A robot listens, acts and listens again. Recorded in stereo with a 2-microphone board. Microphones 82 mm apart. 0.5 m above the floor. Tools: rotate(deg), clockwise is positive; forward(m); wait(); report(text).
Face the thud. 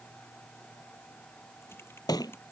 rotate(-50)
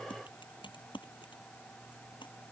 wait()
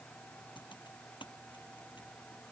report("I heard a thud, but can't make it out now. It was about straight ahead or 80° left.")